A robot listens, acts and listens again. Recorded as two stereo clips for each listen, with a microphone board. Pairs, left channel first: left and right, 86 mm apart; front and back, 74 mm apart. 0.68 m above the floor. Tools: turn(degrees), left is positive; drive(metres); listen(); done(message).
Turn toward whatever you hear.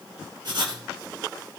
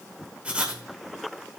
turn(degrees=-110)
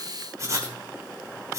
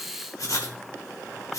turn(degrees=-40)
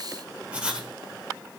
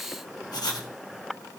turn(degrees=-15)
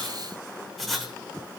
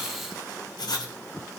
done("Facing the writing, 1 to 2 m away.")